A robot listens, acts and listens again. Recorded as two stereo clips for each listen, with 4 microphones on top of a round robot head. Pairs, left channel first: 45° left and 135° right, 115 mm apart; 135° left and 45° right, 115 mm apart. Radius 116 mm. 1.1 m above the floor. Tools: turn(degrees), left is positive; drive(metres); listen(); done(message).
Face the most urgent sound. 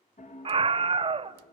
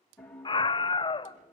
turn(degrees=-175)
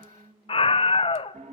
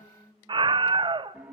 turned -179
done("Facing the scream, under 1 m away.")